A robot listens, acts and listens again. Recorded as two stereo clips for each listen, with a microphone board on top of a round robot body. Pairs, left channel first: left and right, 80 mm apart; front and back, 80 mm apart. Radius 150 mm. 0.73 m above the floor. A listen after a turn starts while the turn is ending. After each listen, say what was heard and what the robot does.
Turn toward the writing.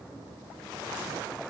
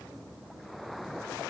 Keep listening.
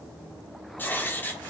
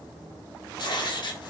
The writing: 25° left. Turn 25° left.
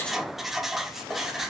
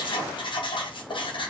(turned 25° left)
Found it: writing, straight ahead.